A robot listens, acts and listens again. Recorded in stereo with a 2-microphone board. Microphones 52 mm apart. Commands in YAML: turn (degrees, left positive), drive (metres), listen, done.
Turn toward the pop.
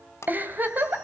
turn: 70
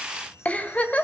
listen: true
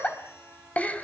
done: "I heard a pop, but can't make it out now. It was about straight ahead or 40° left."